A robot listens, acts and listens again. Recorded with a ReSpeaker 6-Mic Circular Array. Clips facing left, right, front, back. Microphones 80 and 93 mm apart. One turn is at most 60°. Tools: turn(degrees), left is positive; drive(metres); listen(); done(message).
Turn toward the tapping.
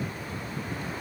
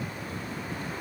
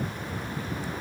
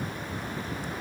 listen()
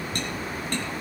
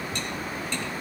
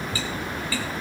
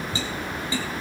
turn(degrees=60)
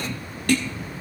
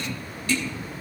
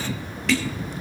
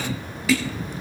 turn(degrees=60)
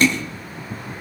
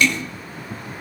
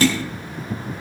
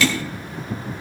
turn(degrees=45)
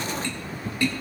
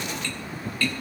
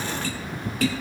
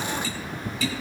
turn(degrees=20)
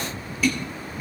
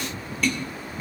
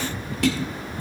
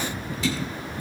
done("Found it: tapping, straight ahead, 2 to 4 m away.")